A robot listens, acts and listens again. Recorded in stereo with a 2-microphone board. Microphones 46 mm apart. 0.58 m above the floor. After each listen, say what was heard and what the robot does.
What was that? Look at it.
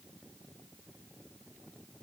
Keep listening.
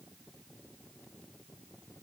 Keep listening.
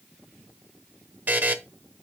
The buzzer: about 40° right or 140° right. Turn 40° right.
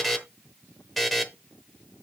Facing the buzzer.